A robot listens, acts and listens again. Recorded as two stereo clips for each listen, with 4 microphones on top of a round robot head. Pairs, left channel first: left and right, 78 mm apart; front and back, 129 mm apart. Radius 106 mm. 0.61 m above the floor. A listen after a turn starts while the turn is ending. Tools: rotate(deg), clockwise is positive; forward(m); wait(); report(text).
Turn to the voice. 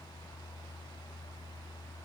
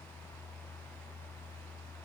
wait()
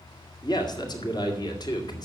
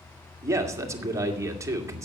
rotate(-115)
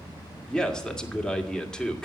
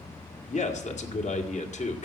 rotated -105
rotate(-10)
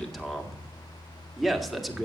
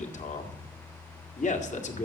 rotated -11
report("Facing the man speaking, 2 to 4 m away.")